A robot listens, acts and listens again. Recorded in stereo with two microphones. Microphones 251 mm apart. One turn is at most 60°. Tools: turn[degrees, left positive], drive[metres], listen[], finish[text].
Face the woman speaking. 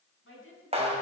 Thought: The woman speaking: about 55° left or 125° left.
Action: turn[55]
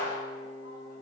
Action: listen[]
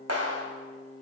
Action: listen[]
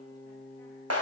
Action: finish[I heard a woman speaking, but can't make it out now. It was about straight ahead or 70° left.]